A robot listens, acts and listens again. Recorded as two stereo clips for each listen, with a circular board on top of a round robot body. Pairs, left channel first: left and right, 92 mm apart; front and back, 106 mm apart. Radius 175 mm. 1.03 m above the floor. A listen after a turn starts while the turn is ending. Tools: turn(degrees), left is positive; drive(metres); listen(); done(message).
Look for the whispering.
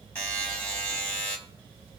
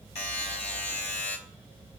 listen()
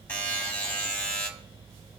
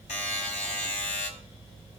listen()
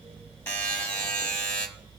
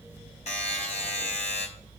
done("I can't make out whispering, only a buzzer.")